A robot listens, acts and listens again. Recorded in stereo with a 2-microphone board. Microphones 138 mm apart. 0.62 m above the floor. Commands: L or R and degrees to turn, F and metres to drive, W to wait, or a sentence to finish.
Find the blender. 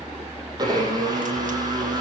R30
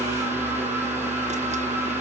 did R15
R15
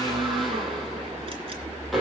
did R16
Facing the blender, over 4 m away.